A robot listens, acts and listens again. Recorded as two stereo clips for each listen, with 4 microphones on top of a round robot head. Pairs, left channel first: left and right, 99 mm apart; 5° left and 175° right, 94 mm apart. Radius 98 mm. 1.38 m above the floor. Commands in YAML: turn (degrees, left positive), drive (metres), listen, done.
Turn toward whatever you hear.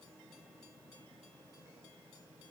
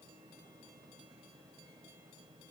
listen: true
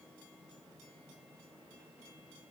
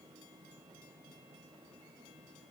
listen: true
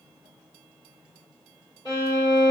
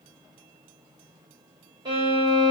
turn: 145
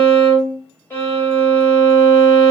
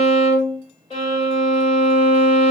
turn: 20
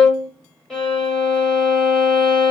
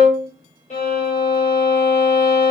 done: "Found it: a violin, straight ahead."